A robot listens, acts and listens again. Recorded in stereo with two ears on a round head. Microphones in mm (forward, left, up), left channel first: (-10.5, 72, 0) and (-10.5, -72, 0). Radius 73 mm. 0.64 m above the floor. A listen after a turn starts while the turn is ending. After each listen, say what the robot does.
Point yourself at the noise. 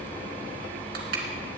Keep listening.
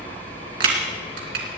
Turn 60° right.
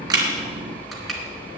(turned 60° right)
Keep listening.
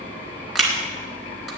Facing the crushing, 2 to 4 m away.